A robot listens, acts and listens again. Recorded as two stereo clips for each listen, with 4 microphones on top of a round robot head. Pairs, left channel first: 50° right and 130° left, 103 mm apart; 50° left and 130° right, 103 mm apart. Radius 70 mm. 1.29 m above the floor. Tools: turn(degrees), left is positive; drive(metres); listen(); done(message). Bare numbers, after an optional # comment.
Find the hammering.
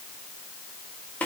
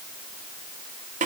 listen()
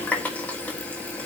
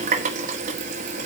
listen()
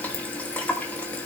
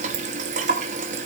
done("I can't make out hammering, only a running tap.")